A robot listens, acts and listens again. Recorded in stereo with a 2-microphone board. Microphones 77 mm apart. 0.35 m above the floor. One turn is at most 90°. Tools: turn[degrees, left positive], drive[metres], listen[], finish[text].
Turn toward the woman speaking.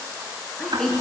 Action: turn[30]
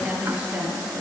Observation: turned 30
Thought: So it is at 20° right.
Action: turn[-20]
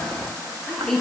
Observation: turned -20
Action: finish[Facing the woman speaking, over 4 m away.]